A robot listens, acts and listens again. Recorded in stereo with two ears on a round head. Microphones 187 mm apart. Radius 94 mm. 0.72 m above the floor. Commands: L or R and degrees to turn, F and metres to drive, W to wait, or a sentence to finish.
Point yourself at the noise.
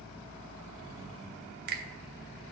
R50
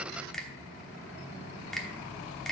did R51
Facing the finger snap.